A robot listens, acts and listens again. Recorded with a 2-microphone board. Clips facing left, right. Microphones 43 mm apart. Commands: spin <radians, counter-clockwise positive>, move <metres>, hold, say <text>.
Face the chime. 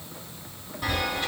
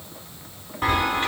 spin -0.79
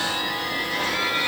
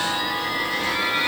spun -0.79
say Facing the chime.